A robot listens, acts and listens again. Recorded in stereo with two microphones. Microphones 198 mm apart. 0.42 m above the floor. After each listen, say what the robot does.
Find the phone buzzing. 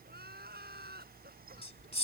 Turn 25° left.
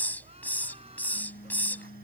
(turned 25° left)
Turn 130° left.
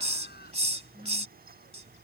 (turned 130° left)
Turn 25° right.
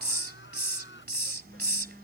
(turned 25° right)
Found it: a phone buzzing, straight ahead.